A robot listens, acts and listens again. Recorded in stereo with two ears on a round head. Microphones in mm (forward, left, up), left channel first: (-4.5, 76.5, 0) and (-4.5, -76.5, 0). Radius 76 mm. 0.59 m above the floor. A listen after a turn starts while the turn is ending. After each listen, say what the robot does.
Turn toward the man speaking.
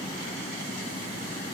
Keep listening.
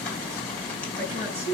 Turn 40° right.
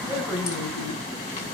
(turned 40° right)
Keep listening.
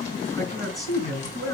Facing the man speaking, over 4 m away.